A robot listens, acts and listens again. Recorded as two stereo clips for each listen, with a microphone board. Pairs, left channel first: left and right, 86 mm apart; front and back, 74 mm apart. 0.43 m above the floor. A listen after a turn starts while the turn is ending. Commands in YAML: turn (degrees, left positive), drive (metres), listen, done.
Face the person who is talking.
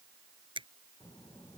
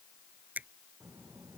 turn: 125
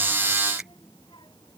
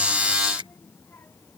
turn: 60
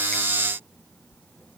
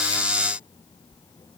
turn: 20
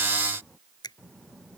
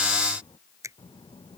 done: "Facing the child speaking."